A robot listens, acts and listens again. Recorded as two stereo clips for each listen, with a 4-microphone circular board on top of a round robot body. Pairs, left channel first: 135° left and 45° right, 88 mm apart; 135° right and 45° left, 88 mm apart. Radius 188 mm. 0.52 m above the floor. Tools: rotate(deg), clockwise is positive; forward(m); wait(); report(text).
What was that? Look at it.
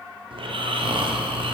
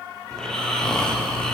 rotate(55)
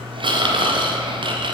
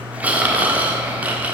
rotate(30)
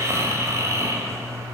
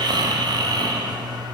rotate(-10)
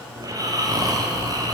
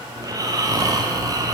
report("Facing the snoring, 1 to 2 m away.")